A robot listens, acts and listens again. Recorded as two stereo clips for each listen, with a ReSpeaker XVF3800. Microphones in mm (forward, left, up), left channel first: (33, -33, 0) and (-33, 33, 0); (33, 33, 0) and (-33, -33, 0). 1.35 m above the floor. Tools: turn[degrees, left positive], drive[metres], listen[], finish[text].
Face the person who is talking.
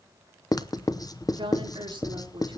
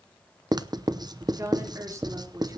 Thought: The woman speaking: 170° left.
Action: turn[170]
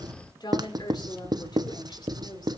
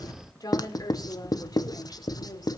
Action: finish[Facing the woman speaking.]